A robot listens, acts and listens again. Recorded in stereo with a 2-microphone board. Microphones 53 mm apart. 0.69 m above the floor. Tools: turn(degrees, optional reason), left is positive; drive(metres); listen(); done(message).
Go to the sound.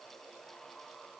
listen()
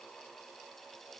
listen()
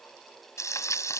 turn(degrees=90)
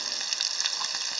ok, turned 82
drive(metres=1.0)
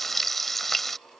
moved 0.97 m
drive(metres=1.0)
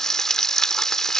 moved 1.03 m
turn(degrees=10, reason="The frying is now 10° left.")
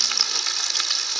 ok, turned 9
drive(metres=1.0)
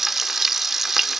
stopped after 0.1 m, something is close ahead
done("I am next to the frying.")